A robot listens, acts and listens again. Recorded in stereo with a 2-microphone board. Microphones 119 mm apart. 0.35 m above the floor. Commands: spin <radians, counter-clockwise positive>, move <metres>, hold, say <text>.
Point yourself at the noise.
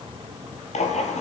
spin 1.31
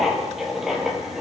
say Found it: writing, straight ahead.